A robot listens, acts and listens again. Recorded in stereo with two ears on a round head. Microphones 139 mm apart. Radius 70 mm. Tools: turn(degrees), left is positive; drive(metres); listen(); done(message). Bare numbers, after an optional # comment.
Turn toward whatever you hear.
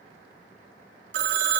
turn(-90)
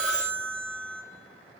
done("Found it: a phone ringing, straight ahead.")